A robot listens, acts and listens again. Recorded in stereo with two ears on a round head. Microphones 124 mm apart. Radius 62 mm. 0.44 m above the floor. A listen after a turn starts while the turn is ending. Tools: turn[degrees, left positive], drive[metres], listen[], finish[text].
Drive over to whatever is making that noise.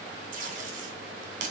Thought: The tape being pulled: about 60° right or 120° right.
Action: turn[-60]
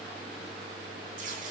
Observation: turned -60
Action: listen[]
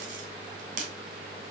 Thought: So it is at 60° right.
Action: turn[-60]
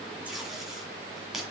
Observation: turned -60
Action: drive[1.0]
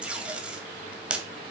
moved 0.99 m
Action: drive[1.0]
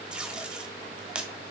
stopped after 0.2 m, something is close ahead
Action: finish[I am next to the tape being pulled.]